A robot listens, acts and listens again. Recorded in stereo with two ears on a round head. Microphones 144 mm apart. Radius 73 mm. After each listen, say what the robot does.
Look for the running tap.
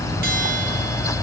Keep listening.
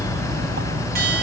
Keep listening.
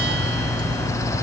I can't make out a running tap.